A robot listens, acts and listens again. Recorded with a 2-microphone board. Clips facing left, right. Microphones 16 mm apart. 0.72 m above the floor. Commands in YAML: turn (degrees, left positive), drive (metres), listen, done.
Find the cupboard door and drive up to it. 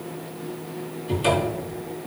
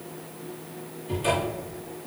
turn: 40
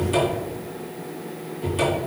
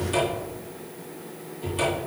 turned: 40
turn: 10
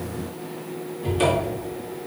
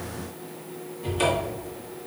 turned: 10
drive: 1.0
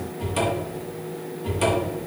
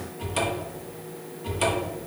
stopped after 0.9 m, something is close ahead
turn: -10
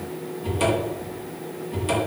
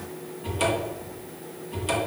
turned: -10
done: "I am next to the cupboard door."